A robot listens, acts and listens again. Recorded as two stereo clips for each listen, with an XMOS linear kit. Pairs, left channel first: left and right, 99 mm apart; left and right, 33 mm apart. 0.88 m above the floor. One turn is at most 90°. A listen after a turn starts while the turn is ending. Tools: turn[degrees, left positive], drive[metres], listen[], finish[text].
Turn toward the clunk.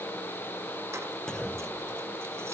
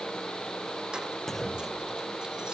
Action: turn[30]
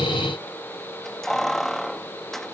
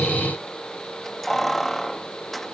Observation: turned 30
Action: listen[]
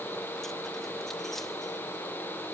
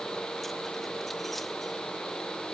Action: finish[I heard a clunk, but can't make it out now. It was about 25° right or 145° left.]